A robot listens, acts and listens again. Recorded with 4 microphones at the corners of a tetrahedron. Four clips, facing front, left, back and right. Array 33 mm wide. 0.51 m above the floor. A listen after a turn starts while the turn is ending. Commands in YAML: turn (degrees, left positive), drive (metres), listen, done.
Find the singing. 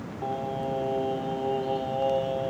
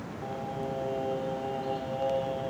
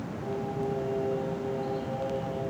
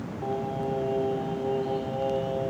turn: 15
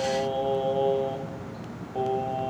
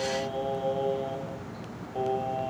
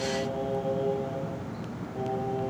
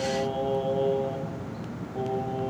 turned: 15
turn: 45
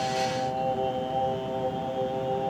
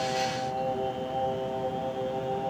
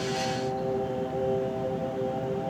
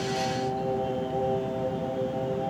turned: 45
turn: 40
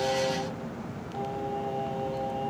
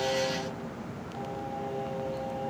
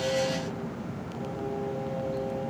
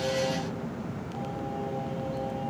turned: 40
listen: true
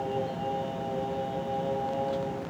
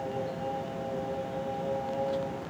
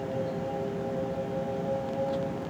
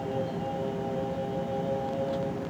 done: "Facing the singing, 2 to 4 m away."